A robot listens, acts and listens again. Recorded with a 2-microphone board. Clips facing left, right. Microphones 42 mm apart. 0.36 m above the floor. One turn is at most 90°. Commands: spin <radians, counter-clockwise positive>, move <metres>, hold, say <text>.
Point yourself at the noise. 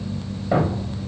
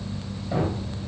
spin 0.70
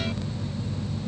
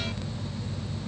hold
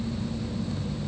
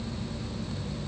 say I heard a thud, but can't make it out now. It was about straight ahead or 100° left.